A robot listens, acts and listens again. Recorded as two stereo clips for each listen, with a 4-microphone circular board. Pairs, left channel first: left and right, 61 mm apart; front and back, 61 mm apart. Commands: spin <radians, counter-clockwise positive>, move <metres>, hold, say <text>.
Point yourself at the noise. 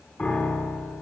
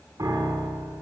spin 2.88
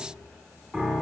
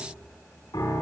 spin -0.17
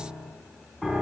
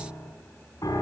say Found it: a piano, straight ahead.